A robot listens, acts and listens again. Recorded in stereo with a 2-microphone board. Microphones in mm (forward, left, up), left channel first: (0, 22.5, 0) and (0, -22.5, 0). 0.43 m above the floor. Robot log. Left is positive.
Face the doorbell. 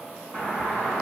note: The doorbell: about 25° left or 155° left.
cmd yaw +25
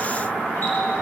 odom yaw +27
note: So it is at 130° left.
cmd yaw +130
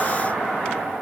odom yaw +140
note: The doorbell is now 10° right.
cmd yaw -10
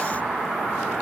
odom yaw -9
end: Facing the doorbell.